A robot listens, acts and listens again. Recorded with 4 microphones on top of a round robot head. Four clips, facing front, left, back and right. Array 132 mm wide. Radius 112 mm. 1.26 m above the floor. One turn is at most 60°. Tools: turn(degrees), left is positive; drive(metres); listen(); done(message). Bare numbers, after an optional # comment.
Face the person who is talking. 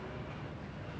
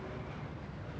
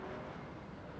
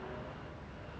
listen()
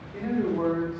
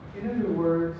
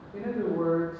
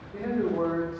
# The man speaking: 120° right.
turn(-60)
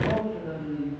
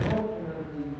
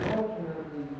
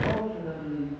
# The man speaking is now 50° right.
turn(-50)
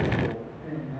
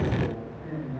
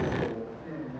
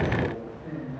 # The man speaking is now 10° right.
turn(-10)
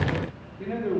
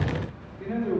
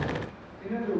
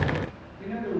done("Found it: a man speaking, straight ahead, 2 to 4 m away.")